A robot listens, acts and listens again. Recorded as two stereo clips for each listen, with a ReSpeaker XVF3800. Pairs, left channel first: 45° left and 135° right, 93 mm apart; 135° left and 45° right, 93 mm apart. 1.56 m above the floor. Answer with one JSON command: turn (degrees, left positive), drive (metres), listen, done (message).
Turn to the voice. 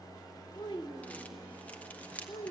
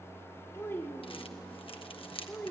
{"turn": 60}
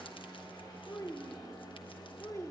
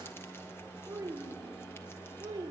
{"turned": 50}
{"turn": -15}
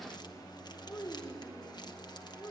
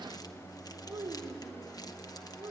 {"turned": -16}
{"turn": -10}
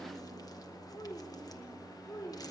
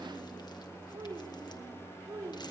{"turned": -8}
{"done": "Facing the child speaking, 2 to 4 m away."}